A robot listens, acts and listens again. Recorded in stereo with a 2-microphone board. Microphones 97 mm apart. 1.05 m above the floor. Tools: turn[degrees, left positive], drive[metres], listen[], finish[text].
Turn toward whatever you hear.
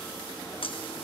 Thought: The scissors: about 65° left or 115° left.
Action: turn[65]
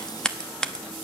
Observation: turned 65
Thought: So it is at 10° left.
Action: turn[10]
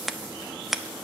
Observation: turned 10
Action: finish[Found it: scissors, straight ahead.]